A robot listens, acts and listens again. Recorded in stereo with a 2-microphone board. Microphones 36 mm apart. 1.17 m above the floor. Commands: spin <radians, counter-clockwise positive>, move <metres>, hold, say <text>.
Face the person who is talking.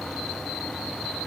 hold
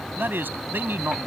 spin -1.57
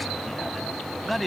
say Facing the man speaking.